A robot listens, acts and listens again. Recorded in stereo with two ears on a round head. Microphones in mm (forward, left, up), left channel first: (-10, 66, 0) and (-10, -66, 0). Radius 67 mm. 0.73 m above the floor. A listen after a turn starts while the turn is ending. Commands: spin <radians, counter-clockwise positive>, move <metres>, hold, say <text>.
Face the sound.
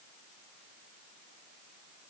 hold
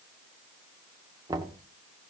spin -0.44
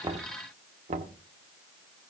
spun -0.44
spin -2.27
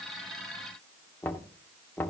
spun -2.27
spin 0.26
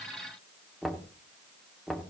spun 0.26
say Found it: knocking, straight ahead, 1 to 2 m away.